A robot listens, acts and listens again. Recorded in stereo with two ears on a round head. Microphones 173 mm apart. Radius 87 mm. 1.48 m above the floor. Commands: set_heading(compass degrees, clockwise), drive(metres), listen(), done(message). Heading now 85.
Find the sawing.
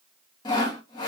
set_heading(60)
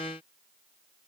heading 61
listen()
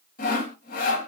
set_heading(291)
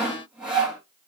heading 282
done("Found it: sawing, straight ahead, 2 to 4 m away.")